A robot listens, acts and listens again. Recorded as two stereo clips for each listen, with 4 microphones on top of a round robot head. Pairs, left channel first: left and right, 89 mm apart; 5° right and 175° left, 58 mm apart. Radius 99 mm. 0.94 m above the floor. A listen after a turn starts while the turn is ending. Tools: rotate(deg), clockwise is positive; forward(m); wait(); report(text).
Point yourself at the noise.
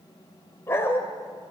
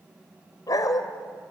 rotate(-20)
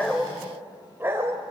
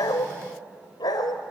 rotate(20)
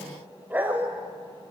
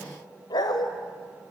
rotate(15)
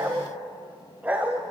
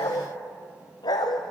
rotate(15)
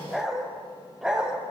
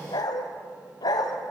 report("Found it: a dog barking, straight ahead.")